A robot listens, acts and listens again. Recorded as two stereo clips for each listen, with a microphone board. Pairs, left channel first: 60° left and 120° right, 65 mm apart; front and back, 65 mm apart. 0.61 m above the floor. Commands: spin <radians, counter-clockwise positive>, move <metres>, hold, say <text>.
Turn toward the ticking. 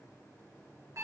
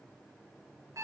hold
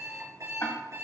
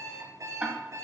spin 1.92
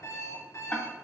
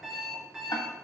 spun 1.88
say Facing the ticking, 1 to 2 m away.